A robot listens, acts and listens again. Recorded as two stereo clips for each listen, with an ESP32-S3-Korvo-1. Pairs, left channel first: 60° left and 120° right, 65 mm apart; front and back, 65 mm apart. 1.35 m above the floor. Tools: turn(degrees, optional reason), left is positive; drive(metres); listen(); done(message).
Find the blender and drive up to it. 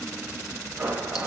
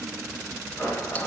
turn(degrees=-55, reason="The blender: 55° right.")
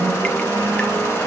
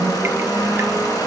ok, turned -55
turn(degrees=10, reason="The blender is now 10° left.")
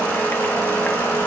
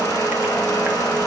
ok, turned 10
drive(metres=1.0)
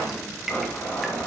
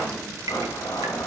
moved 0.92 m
drive(metres=1.0)
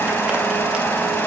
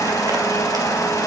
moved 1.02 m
drive(metres=1.0)
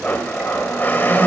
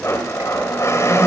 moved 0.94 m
turn(degrees=10, reason="The blender is now 10° left.")
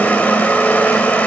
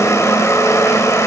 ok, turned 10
drive(metres=1.0)
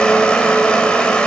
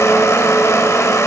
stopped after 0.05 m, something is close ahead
turn(degrees=-10, reason="The blender is now 10° right.")
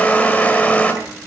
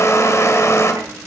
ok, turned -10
done("I am next to the blender.")